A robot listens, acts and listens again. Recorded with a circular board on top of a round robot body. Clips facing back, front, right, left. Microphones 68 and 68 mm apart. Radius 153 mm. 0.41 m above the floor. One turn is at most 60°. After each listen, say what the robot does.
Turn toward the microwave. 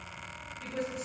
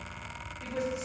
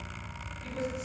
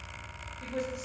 Keep listening.
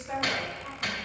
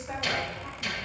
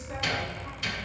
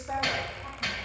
Turn 60° left.
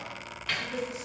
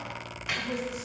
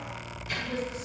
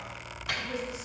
Turn 60° left.
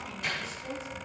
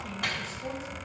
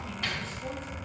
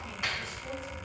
Turn 20° left.
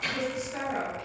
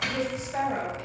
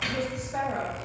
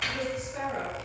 Found it: a microwave, straight ahead, 2 to 4 m away.